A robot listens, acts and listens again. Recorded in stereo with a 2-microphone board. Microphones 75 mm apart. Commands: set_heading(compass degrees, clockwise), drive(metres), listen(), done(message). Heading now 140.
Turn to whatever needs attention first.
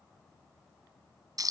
listen()
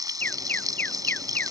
set_heading(115)
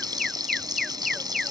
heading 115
done("Found it: an alarm, straight ahead.")